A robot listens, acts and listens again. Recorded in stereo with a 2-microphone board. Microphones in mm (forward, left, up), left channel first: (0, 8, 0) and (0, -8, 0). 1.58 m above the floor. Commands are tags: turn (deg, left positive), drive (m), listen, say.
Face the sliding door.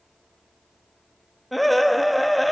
<listen/>
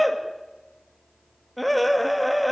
<listen/>
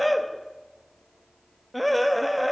<say>I can't make out a sliding door to turn to.</say>